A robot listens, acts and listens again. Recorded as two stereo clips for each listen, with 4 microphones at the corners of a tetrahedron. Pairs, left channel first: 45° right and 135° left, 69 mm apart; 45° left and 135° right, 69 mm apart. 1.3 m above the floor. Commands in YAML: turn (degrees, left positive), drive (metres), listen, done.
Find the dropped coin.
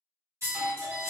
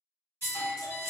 turn: 180
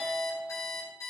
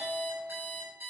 done: "Facing where the dropped coin came from. I can't hear it now."